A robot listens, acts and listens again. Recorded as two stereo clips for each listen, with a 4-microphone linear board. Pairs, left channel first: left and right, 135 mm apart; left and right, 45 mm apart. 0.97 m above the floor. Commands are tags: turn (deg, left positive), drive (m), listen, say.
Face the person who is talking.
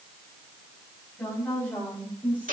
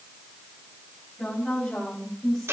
<turn deg="30"/>
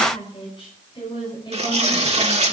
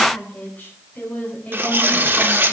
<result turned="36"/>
<turn deg="145"/>
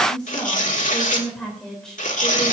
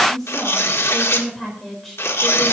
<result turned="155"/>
<say>Found it: a woman speaking, straight ahead.</say>